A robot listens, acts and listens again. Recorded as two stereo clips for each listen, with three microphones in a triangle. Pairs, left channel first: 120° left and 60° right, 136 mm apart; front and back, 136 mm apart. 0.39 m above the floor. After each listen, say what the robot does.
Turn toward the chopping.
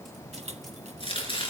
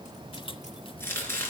Turn 70° left.
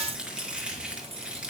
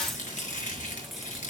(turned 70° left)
Turn 25° left.
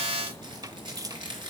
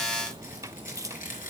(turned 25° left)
Found it: chopping, straight ahead, over 4 m away.